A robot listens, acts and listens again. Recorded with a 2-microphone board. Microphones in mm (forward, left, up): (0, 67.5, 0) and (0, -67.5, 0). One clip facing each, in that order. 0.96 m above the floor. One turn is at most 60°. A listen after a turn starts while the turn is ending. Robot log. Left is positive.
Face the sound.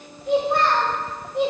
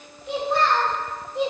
note: The child speaking: about 60° left or 120° left.
cmd yaw +60
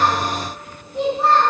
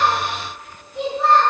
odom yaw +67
note: So it is at 35° left.
cmd yaw +35
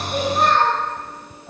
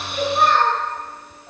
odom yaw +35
note: The child speaking is now 10° right.
cmd yaw -10
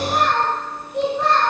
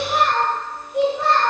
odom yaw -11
note: The child speaking is now 10° right.
cmd yaw -10
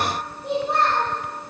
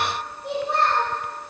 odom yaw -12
end: Found it: a child speaking, straight ahead, 2 to 4 m away.